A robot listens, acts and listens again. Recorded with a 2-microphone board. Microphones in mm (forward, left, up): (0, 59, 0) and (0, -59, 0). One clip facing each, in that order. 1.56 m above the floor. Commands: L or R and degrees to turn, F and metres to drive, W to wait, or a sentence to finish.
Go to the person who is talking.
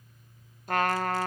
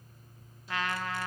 W
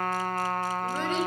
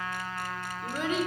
R30
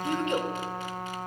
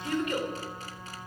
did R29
L25
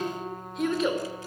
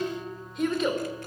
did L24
F1.0
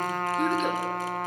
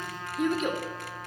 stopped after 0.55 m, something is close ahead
Blocked. The child speaking is further on, straight ahead.